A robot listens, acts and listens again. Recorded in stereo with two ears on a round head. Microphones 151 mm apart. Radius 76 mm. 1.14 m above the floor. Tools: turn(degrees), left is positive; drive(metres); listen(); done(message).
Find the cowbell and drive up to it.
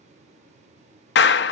listen()
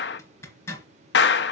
listen()
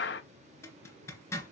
done("I can't make out a cowbell to turn to.")